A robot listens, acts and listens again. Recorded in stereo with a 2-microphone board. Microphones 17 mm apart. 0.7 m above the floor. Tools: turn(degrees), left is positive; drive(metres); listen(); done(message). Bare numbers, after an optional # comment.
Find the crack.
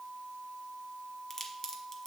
# The crack: about 25° left or 155° left.
turn(25)
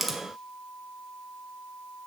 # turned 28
done("Facing the crack, 1 to 2 m away.")